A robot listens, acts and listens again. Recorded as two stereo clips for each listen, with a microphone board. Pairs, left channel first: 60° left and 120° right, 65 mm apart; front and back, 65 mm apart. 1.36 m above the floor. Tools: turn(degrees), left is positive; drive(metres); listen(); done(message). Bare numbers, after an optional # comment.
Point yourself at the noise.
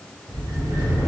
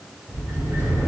# The sliding door: 135° right.
turn(-135)
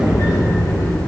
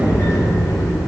# The sliding door is now 30° left.
turn(30)
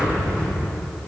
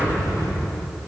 # The sliding door is now 20° right.
turn(-20)
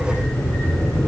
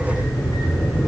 done("Facing the sliding door.")